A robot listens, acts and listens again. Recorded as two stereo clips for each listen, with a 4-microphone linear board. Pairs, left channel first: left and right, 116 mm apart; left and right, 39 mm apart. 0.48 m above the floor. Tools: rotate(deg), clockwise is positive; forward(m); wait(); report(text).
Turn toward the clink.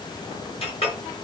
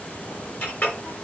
rotate(-55)
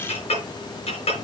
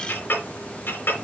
rotate(-65)
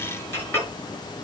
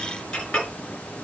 rotate(-20)
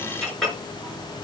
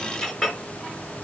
report("Facing the clink, over 4 m away.")